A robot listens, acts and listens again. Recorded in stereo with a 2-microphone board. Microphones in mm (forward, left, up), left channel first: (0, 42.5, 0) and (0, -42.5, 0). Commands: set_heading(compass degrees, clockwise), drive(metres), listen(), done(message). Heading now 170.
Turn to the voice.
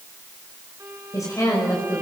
set_heading(125)
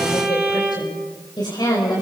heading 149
set_heading(34)
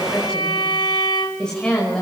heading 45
set_heading(35)
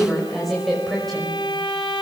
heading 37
done("Found it: a woman speaking, straight ahead.")